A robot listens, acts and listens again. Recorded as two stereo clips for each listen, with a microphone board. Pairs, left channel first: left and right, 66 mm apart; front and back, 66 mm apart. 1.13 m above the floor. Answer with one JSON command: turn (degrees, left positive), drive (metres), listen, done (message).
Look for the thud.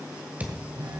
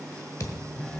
{"turn": -25}
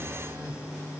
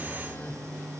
{"done": "Facing where the thud came from. I can't hear it now."}